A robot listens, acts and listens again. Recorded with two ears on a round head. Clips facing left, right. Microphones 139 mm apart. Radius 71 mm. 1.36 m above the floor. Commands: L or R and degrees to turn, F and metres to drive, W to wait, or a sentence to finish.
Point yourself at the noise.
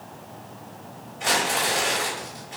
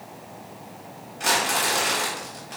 R60
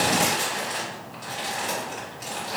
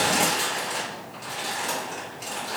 Found it: crumpling, straight ahead.